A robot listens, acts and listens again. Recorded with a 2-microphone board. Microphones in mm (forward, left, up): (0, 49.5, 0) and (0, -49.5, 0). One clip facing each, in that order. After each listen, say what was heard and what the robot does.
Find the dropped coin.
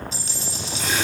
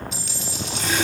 The dropped coin: about 35° left or 145° left. Turn 35° left.
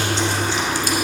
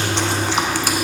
Keep listening.
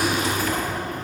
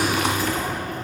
I heard a dropped coin, but can't make it out now. It was about straight ahead or 110° left.